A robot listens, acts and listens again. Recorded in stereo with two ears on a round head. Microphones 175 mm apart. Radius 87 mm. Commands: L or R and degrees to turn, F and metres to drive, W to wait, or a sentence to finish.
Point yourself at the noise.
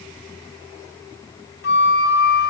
L55
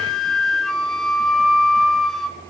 Facing the flute.